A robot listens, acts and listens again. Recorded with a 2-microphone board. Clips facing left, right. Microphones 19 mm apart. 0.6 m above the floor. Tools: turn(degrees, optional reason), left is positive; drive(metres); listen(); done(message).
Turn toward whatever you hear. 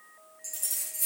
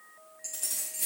turn(degrees=-20, reason="The keys jangling: about 20° right or 160° right.")
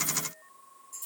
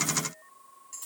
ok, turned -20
turn(degrees=-35, reason="The keys jangling: about 35° right or 145° right.")
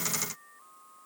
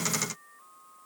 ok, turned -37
listen()
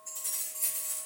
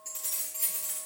turn(degrees=-110, reason="So it is at 110° right.")
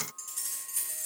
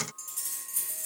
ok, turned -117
done("Facing the keys jangling.")